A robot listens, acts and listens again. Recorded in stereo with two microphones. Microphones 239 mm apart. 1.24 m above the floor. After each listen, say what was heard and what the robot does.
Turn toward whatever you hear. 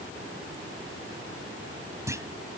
Turn 30° right.
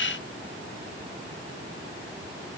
Keep listening.
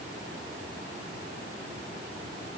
I heard a clunk, but can't make it out now. It was about 20° left or 140° right.